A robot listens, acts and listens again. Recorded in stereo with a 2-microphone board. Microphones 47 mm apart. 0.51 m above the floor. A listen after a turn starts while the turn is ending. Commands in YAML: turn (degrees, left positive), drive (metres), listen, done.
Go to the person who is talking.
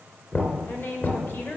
turn: 50
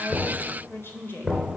turn: 70
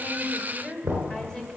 turn: 15
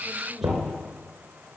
listen: true
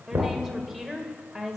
drive: 1.0
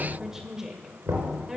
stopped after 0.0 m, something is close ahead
turn: -10
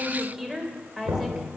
done: "Blocked. The woman speaking is further on, straight ahead."